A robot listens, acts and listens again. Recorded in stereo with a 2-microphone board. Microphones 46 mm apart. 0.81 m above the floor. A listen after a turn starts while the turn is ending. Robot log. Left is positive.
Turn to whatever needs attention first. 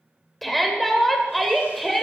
cmd yaw +30
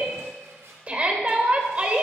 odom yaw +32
note: So it is at 30° right.
cmd yaw -30
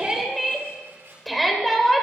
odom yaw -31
end: Found it: a shout, straight ahead, 2 to 4 m away.